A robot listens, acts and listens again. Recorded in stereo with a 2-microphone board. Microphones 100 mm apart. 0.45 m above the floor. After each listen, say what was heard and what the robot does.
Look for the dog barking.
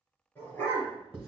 Turn 30° left.
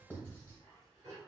So it is at 30° right. Turn 30° right.
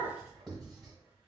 The dog barking is now 15° right. Turn 15° right.
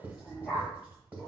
The dog barking is now 10° right. Turn 10° right.
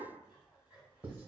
Keep listening.
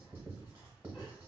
Keep listening.
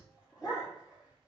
The dog barking is now 10° right. Turn 10° right.
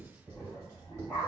Facing the dog barking, 2 to 4 m away.